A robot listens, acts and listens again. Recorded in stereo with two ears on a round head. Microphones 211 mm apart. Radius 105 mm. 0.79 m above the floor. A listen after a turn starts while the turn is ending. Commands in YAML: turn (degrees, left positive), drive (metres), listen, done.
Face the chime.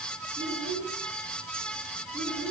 listen: true
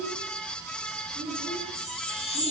turn: 30
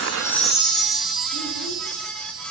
done: "Found it: a chime, straight ahead."